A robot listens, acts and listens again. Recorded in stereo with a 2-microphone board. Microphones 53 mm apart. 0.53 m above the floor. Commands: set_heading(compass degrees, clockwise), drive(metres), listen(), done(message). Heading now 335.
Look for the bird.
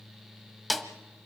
listen()
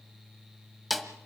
listen()
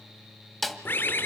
set_heading(295)
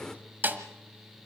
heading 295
set_heading(285)
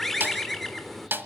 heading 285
done("Facing the bird.")